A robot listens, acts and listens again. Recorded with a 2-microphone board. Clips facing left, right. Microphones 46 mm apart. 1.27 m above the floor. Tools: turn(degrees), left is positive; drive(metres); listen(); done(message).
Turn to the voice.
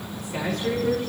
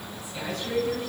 turn(degrees=90)
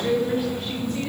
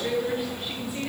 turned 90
done("Found it: a man speaking, straight ahead, over 4 m away.")